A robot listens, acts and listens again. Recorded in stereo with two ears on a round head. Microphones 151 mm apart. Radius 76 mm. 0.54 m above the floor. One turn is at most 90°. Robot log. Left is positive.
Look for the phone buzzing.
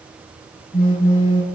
note: The phone buzzing: about 35° left or 145° left.
cmd yaw +35
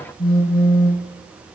note: So it is at 110° left.
cmd yaw +90
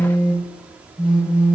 note: The phone buzzing is now 25° left.
cmd yaw +25
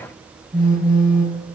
end: Found it: a phone buzzing, straight ahead, 2 to 4 m away.